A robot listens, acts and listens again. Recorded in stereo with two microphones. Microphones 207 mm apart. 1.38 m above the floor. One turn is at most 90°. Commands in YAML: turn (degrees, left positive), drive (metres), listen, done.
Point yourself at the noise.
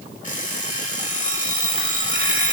turn: 40
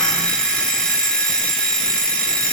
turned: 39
done: "Facing the alarm clock, 1 to 2 m away."